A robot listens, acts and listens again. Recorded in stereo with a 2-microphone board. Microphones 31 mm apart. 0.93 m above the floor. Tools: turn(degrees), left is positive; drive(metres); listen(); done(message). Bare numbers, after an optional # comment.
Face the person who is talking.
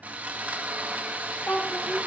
turn(90)
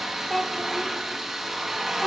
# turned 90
# So it is at 10° left.
turn(10)
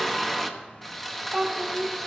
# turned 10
done("Facing the child speaking, 2 to 4 m away.")